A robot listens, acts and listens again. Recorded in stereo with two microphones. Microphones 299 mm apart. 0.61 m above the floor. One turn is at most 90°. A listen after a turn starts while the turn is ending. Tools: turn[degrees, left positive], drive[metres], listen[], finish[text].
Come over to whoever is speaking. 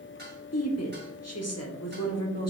Thought: The woman speaking: about 60° left or 120° left.
Action: turn[60]
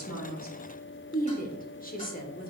Thought: So it is at 35° left.
Action: turn[35]
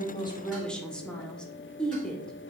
Action: drive[1.0]
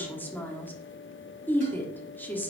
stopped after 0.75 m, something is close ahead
Thought: The woman speaking is now 10° left.
Action: turn[10]
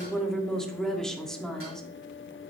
Action: finish[I am next to the woman speaking.]